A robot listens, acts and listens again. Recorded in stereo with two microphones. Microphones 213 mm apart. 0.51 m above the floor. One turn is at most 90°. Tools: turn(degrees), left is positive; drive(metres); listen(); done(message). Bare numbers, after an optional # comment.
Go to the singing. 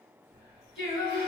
# The singing: about 65° left or 115° left.
turn(65)
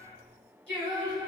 drive(1.0)
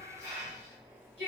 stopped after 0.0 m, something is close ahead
done("Blocked. The singing is further on, straight ahead.")